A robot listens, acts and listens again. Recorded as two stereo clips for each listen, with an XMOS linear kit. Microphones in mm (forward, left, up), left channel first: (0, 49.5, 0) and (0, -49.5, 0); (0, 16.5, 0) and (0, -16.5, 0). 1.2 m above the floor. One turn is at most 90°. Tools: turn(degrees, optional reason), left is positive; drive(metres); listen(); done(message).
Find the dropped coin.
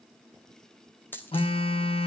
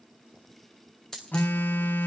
turn(degrees=20, reason="The dropped coin: about 20° left or 160° left.")
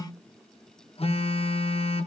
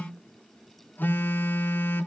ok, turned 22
listen()
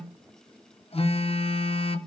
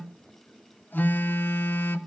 done("I heard a dropped coin, but can't make it out now. It was about straight ahead or 135° left.")